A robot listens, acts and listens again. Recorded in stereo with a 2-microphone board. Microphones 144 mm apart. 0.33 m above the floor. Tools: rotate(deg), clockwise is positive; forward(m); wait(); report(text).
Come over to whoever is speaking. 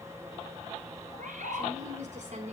rotate(55)
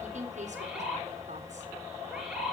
rotate(60)
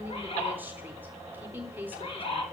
rotate(15)
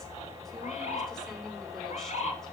wait()
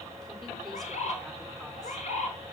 wait()
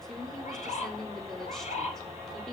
forward(1.0)
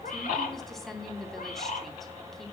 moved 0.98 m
forward(1.0)
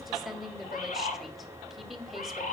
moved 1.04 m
forward(1.0)
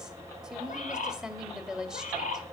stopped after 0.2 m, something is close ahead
rotate(10)
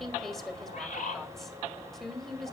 report("Arrived at the woman speaking, straight ahead.")